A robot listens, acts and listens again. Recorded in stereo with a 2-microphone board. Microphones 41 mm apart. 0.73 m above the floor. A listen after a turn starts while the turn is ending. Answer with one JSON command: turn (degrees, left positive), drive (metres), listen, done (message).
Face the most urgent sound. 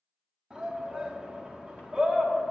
{"turn": -20}
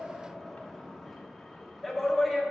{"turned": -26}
{"done": "Facing the shout, 1 to 2 m away."}